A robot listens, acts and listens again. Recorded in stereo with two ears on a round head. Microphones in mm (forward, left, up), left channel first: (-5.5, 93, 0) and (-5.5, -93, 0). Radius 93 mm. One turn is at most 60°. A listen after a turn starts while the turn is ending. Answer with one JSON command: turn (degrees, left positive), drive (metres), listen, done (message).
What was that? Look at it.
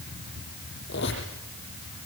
{"turn": 60}
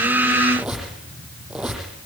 {"done": "Found it: a squeak, straight ahead, over 4 m away."}